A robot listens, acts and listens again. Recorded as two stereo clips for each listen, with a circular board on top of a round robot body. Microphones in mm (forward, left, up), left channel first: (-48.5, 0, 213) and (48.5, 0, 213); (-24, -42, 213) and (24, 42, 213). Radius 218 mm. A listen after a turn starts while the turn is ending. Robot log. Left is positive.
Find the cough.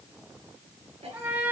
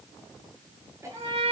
end: Facing the cough, over 4 m away.